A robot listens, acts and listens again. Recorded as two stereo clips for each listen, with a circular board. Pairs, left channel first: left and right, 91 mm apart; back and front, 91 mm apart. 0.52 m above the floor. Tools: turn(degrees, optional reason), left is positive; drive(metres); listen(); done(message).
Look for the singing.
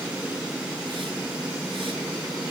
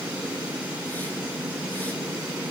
listen()
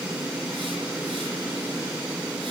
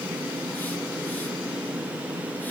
listen()
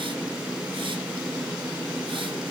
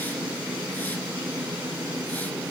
done("I can't make out singing to turn to.")